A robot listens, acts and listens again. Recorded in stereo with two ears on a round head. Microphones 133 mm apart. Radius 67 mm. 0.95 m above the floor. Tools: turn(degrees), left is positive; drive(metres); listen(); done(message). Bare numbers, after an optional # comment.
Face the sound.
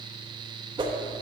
# The whoosh: about 30° right or 150° right.
turn(-30)
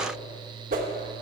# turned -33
# So it is at 115° right.
turn(-115)
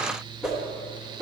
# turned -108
done("Facing the whoosh.")